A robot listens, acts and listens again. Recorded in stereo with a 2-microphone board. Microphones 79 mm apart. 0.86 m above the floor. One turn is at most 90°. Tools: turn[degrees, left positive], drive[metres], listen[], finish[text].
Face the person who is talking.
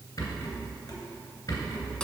Action: listen[]
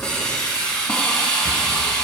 Action: listen[]
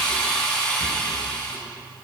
Action: finish[I can't make out anyone speaking, only a hiss and a rattle.]